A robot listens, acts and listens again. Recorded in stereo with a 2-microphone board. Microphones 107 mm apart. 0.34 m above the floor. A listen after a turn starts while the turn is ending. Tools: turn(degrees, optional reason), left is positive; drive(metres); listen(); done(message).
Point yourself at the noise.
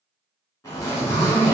turn(degrees=30, reason="The zipper: about 30° left or 150° left.")
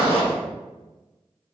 listen()
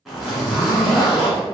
done("Facing the zipper.")